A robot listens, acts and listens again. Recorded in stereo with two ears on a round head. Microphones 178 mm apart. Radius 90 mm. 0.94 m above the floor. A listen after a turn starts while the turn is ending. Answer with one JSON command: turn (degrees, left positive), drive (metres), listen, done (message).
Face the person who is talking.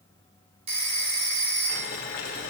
{"listen": true}
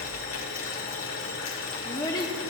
{"turn": 20}
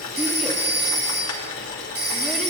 {"listen": true}
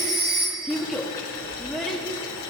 {"done": "Found it: a child speaking, straight ahead, under 1 m away."}